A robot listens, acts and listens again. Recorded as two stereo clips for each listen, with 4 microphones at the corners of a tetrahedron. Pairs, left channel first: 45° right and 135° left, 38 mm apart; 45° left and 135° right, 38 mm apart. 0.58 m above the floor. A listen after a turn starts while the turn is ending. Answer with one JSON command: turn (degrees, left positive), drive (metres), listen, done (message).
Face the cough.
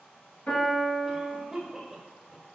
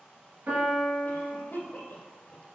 {"turn": 50}
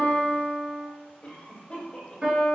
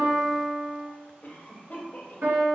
{"done": "Facing the cough."}